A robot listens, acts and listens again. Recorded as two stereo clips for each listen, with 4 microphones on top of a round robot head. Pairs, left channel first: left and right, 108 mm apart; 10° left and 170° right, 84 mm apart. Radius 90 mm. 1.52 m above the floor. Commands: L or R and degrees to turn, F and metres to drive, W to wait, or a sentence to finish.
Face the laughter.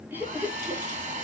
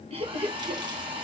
R165
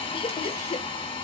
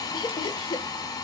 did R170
L55
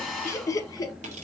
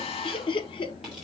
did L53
L35
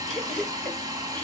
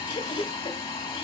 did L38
L10
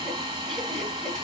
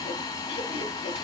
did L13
W
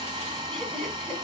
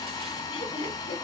Found it: laughter, straight ahead, 2 to 4 m away.